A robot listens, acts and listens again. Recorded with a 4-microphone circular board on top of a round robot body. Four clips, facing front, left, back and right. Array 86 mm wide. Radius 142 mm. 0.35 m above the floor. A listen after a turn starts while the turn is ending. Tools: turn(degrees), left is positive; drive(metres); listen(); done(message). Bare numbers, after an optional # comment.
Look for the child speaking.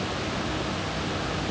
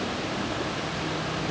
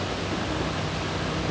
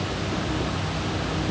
listen()
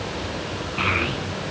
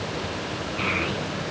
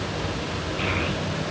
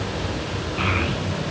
# The child speaking: 30° right.
turn(-30)
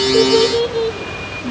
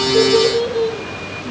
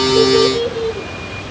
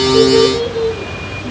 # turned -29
done("Facing the child speaking, over 4 m away.")